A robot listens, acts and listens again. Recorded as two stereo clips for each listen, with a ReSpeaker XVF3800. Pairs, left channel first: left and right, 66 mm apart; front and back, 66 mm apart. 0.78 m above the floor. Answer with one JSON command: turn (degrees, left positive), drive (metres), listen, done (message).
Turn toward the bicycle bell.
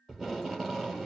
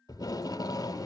{"listen": true}
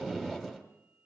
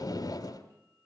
{"listen": true}
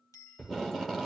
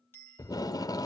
{"turn": 55}
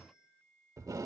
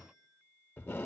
{"listen": true}
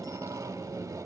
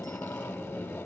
{"listen": true}
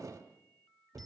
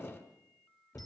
{"done": "Facing where the bicycle bell came from. I can't hear it now."}